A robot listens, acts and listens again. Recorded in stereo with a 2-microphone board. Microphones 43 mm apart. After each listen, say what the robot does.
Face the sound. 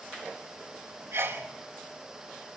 Turn 90° right.
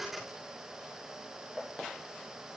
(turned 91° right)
I heard a sneeze from this way, but can't make it out now.